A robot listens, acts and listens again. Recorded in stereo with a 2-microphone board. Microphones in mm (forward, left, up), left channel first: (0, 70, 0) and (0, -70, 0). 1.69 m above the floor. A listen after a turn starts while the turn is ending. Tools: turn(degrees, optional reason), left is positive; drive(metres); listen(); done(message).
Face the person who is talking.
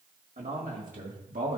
turn(degrees=-70, reason="The man speaking: about 70° right or 110° right.")
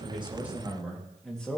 turn(degrees=10, reason="So it is at 10° left.")
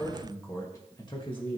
turn(degrees=40, reason="The man speaking is now 40° left.")
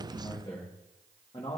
turn(degrees=45, reason="The man speaking is now 45° left.")
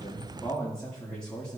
done("Facing the man speaking, 1 to 2 m away.")